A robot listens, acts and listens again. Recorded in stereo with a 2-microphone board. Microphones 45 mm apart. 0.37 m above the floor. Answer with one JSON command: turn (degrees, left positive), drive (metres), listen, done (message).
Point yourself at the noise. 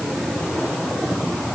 {"listen": true}
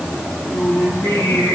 {"turn": 90}
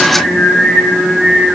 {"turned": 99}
{"done": "Facing the singing, 2 to 4 m away."}